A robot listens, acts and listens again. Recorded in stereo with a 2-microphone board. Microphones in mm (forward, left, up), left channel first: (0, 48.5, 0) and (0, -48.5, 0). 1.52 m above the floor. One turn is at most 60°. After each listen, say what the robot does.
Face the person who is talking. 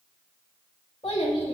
Turn 60° left.
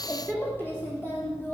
Turn 20° left.
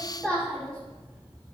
Turn 10° left.
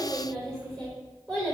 Facing the child speaking.